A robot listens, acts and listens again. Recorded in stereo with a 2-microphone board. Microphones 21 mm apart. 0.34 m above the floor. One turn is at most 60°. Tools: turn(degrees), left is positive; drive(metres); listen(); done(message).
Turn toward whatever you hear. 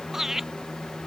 turn(degrees=-15)
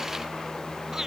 listen()
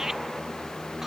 listen()
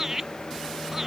turn(degrees=-15)
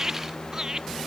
turn(degrees=-25)
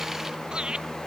turn(degrees=-60)
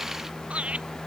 turn(degrees=-60)
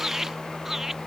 turn(degrees=-20)
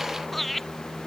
done("Facing the laughter.")